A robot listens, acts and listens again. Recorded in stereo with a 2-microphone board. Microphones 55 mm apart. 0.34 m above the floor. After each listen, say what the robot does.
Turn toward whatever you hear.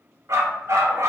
Turn 65° right.
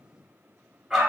Found it: a dog barking, straight ahead, 1 to 2 m away.